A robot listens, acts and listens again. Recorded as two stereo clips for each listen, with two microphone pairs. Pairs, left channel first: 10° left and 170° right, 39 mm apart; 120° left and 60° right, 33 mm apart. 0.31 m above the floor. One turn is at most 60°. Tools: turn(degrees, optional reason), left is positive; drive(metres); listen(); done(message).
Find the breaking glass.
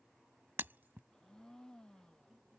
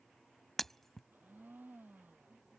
turn(degrees=-60, reason="The breaking glass: 160° right.")
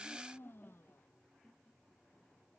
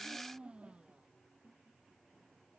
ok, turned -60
turn(degrees=-60, reason="Nothing new. It was at 100° right.")
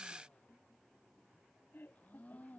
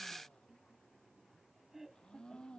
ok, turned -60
turn(degrees=-40, reason="Nothing new. It was at 40° right.")
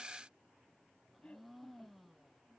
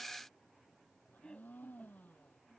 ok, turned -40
done("I heard breaking glass from this way, but can't make it out now.")